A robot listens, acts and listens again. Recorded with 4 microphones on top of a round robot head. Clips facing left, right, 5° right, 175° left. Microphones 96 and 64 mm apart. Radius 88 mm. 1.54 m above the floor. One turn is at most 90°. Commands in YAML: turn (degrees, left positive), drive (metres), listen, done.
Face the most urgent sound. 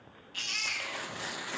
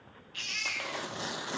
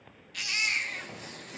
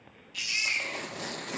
turn: 30
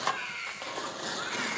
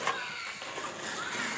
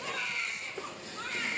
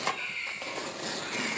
turn: -10
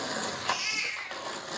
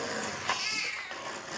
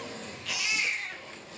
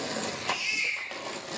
done: "Found it: a baby crying, straight ahead, 1 to 2 m away."